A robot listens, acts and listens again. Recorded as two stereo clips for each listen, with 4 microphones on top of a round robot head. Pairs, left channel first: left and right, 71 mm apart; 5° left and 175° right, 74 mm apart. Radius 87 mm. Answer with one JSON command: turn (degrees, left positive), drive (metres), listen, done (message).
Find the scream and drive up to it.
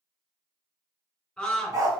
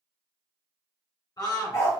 {"turn": 10}
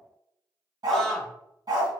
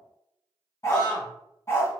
{"drive": 1.0}
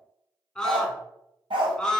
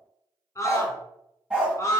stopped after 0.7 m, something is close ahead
{"done": "Arrived at the scream, straight ahead."}